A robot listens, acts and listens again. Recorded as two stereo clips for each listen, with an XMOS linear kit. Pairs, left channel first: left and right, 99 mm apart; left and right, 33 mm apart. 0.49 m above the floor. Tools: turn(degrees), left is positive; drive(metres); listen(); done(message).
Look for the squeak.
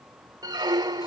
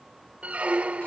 turn(degrees=-40)
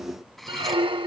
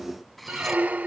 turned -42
turn(degrees=-85)
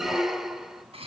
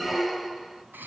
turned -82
done("Facing the squeak, 1 to 2 m away.")